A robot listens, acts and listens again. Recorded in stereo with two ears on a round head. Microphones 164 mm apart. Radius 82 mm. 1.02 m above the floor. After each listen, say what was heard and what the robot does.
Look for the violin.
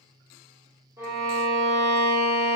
The violin: about 15° right or 165° right. Turn 15° right.
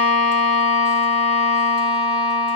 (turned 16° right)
Facing the violin, under 1 m away.